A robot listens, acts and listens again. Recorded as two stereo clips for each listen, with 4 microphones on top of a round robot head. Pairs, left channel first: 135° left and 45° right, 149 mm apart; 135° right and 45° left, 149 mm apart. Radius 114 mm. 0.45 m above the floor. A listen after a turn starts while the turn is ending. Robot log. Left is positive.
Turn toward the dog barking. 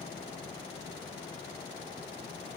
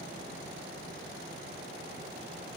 cmd idle
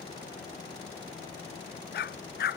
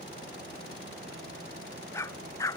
note: The dog barking: 150° left.
cmd yaw +150
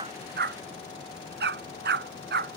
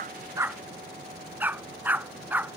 note: The dog barking is now 35° right.
cmd yaw -35
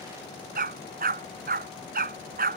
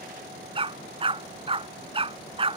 note: The dog barking is now 15° right.
cmd yaw -15
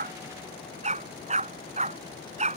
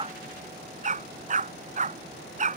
end: Found it: a dog barking, straight ahead.